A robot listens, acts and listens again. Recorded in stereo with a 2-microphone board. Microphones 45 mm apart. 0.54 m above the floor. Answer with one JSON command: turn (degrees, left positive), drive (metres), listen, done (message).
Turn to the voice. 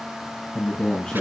{"turn": 15}
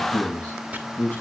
{"turn": 150}
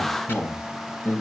{"turn": 45}
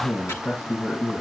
{"turn": 25}
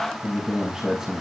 {"turn": -10}
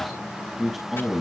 {"done": "Facing the man speaking, over 4 m away."}